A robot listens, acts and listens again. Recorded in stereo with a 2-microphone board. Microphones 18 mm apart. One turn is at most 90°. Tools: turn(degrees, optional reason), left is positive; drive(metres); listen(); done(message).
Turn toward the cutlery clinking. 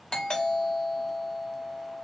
listen()
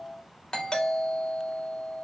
listen()
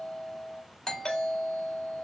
done("I can't make out cutlery clinking, only a doorbell.")